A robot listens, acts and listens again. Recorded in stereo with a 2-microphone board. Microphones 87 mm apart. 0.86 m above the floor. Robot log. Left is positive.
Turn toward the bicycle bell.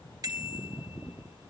note: The bicycle bell: about 45° right or 135° right.
cmd yaw -45
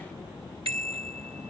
note: So it is at 95° right.
cmd yaw -95
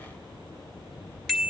end: Facing the bicycle bell.